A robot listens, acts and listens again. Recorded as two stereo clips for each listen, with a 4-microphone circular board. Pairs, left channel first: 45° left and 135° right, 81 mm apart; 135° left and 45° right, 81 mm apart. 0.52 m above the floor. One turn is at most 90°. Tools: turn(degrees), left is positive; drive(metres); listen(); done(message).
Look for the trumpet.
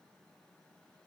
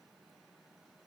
listen()
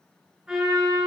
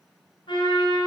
turn(degrees=90)
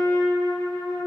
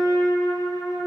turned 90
turn(degrees=85)
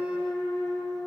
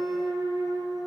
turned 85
done("Found it: a trumpet, straight ahead, over 4 m away.")